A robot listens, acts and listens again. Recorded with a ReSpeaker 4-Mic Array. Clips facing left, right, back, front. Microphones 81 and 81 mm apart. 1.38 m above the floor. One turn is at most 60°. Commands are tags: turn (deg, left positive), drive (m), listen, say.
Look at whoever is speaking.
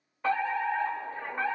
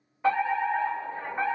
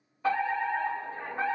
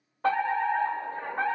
<listen/>
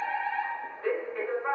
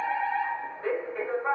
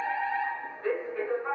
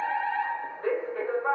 <listen/>
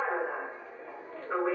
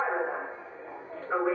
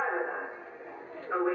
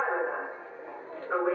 <say>I can't make out anyone speaking, only a fire alarm.</say>